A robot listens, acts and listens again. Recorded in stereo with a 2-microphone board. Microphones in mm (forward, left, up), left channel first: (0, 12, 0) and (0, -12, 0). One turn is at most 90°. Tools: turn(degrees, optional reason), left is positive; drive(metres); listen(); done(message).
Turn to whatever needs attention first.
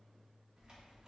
listen()
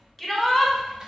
turn(degrees=30)
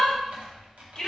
turn(degrees=90, reason="So it is at 145° left.")
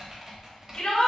turn(degrees=55, reason="The shout is now 55° left.")
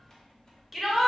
done("Found it: a shout, straight ahead.")